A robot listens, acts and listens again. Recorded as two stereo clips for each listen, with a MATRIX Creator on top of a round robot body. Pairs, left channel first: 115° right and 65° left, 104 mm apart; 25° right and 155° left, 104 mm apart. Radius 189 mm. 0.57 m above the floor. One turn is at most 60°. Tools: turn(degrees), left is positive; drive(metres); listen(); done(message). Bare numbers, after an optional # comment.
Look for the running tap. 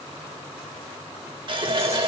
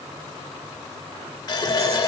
# The running tap: 30° left.
turn(30)
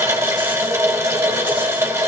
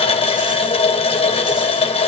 done("Facing the running tap.")